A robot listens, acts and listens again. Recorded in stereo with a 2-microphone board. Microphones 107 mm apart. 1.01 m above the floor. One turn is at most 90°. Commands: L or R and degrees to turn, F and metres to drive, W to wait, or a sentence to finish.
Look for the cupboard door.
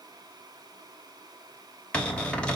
L30
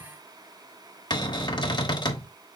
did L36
L90
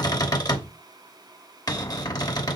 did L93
L40
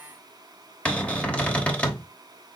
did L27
L15
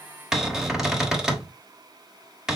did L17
Found it: a cupboard door, straight ahead, under 1 m away.